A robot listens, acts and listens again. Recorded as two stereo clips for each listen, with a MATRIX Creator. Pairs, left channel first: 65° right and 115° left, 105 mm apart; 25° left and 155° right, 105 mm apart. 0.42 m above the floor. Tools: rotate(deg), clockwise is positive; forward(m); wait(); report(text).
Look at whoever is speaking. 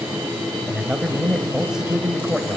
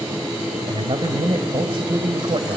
rotate(165)
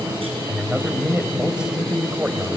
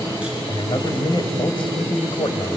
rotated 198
rotate(-35)
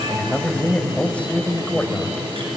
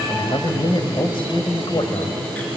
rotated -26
rotate(-10)
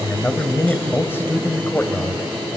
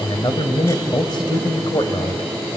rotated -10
report("Found it: a man speaking, straight ahead.")